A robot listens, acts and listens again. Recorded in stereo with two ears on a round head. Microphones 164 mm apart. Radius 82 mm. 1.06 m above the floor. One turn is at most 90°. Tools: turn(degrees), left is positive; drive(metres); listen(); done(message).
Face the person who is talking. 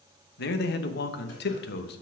turn(degrees=60)
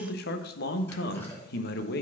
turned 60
turn(degrees=60)
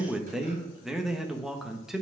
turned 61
done("Found it: a man speaking, straight ahead.")